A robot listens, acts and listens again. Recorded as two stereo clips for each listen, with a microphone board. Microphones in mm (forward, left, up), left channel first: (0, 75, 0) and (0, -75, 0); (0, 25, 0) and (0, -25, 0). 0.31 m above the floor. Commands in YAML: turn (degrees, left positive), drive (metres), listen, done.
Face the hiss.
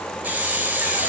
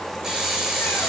turn: -30
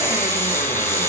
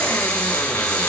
listen: true
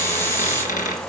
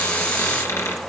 listen: true
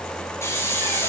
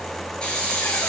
turn: 20
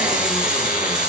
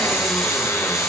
listen: true
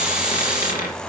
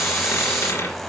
done: "Found it: a hiss, straight ahead, over 4 m away."